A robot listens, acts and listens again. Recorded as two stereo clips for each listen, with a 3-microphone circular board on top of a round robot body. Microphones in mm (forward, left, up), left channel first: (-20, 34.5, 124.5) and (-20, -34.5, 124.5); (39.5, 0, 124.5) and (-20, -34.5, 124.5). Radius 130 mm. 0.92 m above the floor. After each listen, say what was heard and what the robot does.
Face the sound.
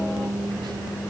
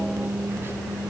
Keep listening.
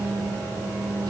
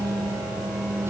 Keep listening.
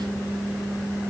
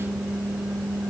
I can't make out anything.